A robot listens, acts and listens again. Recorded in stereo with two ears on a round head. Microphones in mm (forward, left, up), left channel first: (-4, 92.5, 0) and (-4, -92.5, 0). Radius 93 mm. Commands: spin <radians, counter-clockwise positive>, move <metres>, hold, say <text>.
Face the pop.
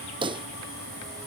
spin -0.44
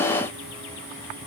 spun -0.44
hold
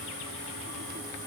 say I heard a pop, but can't make it out now. It was about straight ahead or 130° right.